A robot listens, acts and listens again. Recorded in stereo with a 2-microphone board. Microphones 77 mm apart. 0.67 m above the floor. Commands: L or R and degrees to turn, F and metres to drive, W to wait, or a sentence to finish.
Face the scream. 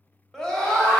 L30
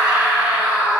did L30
R20
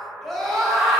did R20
Found it: a scream, straight ahead.